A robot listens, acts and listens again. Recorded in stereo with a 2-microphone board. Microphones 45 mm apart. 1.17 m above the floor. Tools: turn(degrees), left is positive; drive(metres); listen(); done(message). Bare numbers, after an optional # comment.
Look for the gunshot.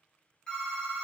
listen()
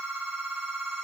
listen()
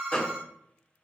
# The gunshot: about 30° left or 150° left.
turn(30)
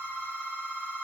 listen()
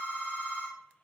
done("I heard a gunshot, but can't make it out now. It was about straight ahead or 120° left.")